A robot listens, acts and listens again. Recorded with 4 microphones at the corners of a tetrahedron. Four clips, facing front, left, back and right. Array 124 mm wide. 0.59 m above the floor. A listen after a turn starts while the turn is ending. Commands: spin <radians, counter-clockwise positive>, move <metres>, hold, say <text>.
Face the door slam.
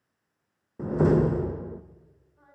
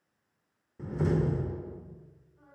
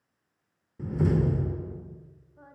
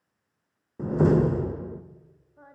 spin -0.70
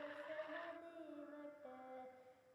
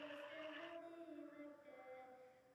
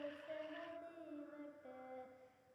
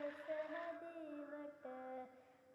say I heard a door slam from this way, but can't make it out now.